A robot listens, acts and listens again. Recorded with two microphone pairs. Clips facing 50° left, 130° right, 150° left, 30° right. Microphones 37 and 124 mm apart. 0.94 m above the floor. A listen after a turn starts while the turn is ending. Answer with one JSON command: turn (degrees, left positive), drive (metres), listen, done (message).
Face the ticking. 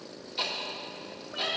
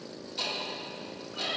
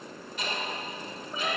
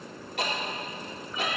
{"turn": -15}
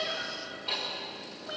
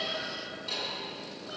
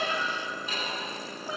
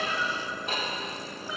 {"done": "Facing the ticking, 1 to 2 m away."}